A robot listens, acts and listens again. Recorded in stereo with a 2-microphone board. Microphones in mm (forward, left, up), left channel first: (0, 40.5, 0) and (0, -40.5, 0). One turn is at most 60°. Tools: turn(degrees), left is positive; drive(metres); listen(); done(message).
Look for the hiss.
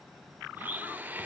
listen()
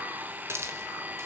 turn(degrees=-35)
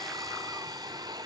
listen()
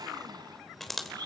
done("Found it: a hiss, straight ahead.")